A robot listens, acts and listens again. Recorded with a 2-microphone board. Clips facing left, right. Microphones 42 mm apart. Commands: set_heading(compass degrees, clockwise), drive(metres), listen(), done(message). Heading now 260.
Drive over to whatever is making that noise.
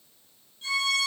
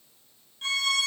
set_heading(310)
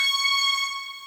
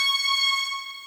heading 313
drive(1.0)
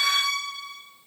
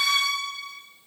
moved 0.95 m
drive(1.0)
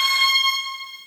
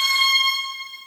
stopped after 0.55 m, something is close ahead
done("I am next to the violin.")